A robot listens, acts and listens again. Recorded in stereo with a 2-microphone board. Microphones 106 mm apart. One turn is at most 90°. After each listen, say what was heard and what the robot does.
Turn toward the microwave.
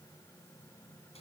Keep listening.
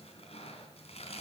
Keep listening.
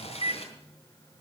The microwave: about 45° right or 135° right. Turn 45° right.
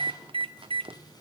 So it is at 80° right. Turn 80° right.
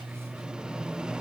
The microwave is now 10° right. Turn 10° right.
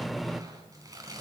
Found it: a microwave, straight ahead.